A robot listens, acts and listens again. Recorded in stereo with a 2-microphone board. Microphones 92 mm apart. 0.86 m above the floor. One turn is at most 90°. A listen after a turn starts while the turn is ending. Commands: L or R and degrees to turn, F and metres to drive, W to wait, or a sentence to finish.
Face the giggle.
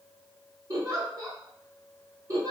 R35
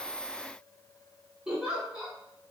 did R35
R10
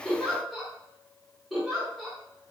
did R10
Facing the giggle, under 1 m away.